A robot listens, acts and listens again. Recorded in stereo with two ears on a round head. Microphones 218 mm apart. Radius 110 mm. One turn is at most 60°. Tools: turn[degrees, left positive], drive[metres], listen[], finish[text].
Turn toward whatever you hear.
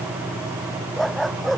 Action: turn[30]
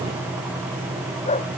Thought: So it is at 150° left.
Action: turn[60]
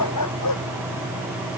Thought: The dog barking is now 100° left.
Action: turn[60]
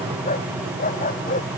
Thought: The dog barking is now 35° left.
Action: turn[35]
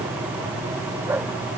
Action: listen[]
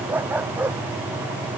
Thought: The dog barking is now 10° right.
Action: turn[-10]
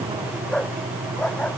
Action: finish[Facing the dog barking.]